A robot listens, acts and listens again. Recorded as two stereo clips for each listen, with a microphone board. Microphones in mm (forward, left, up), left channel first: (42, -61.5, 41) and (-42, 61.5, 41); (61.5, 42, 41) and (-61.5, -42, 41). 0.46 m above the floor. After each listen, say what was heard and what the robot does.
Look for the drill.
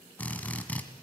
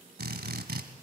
The drill: 135° right. Turn 135° right.
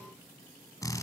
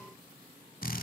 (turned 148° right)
The drill is now 15° left. Turn 15° left.
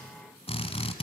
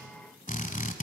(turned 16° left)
Facing the drill.